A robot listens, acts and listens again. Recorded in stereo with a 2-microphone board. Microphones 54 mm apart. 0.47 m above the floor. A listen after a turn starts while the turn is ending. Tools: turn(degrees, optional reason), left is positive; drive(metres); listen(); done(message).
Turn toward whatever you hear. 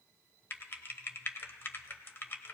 turn(degrees=40, reason="The typing on a keyboard: about 40° left or 140° left.")
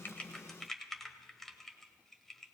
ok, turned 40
done("Found it: typing on a keyboard, straight ahead, under 1 m away.")